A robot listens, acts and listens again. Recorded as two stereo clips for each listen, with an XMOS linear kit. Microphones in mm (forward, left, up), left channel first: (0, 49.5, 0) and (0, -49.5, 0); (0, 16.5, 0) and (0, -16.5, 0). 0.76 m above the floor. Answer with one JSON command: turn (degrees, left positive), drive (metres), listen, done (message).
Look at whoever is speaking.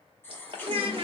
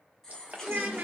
{"turn": -65}
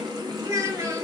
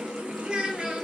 {"turn": -35}
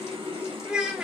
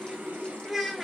{"turn": -10}
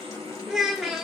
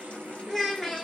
{"done": "Facing the child speaking, 1 to 2 m away."}